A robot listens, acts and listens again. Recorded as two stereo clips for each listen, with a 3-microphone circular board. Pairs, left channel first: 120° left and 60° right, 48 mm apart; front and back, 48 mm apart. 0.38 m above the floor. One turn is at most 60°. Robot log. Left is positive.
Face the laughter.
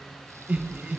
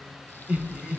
note: The laughter: 115° right.
cmd yaw -60
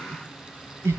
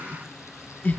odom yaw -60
note: The laughter is now 50° right.
cmd yaw -50
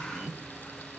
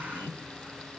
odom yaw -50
note: The laughter is now 15° left.
cmd yaw +15
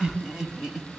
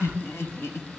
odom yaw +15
note: The laughter is now 20° left.
cmd yaw +20
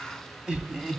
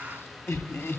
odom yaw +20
note: The laughter is now 20° left.
cmd yaw +20
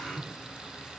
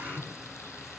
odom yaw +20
end: Found it: laughter, straight ahead.